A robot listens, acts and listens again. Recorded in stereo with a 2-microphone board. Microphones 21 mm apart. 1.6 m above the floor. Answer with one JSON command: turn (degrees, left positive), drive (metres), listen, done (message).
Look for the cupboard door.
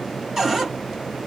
{"turn": -20}
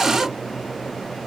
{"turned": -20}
{"listen": true}
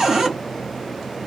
{"turn": -145}
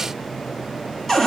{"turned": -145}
{"turn": 15}
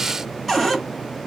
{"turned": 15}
{"done": "Found it: a cupboard door, straight ahead."}